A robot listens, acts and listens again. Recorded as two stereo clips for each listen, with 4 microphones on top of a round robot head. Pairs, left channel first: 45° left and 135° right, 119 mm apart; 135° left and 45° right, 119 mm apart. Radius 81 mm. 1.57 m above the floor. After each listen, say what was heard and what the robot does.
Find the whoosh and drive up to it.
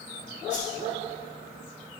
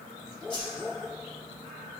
The whoosh: 75° left. Turn 75° left.
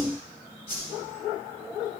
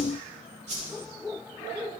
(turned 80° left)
Drive 1.0 m forward.
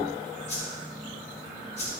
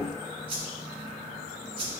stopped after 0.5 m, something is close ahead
Something is in my way. I am facing the whoosh but have not reached it.